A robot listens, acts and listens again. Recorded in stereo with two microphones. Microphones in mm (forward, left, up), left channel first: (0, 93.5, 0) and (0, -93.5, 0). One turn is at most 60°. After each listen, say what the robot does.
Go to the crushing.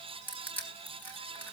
Turn 30° left.
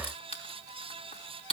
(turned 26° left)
Turn 60° left.
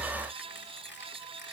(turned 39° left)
Turn 60° left.
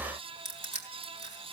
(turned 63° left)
Turn 40° left.
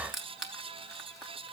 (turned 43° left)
Drive 1.0 m forward.
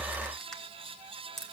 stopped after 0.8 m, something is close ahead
Blocked. The crushing is further on, straight ahead.